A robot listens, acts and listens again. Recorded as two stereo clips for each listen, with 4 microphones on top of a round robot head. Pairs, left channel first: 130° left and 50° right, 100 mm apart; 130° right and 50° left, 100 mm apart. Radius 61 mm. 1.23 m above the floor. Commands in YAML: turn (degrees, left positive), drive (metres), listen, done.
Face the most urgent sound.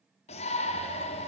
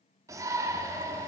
turn: 110
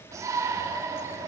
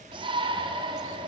turn: 10
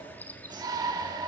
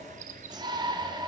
done: "Found it: a shout, straight ahead, 2 to 4 m away."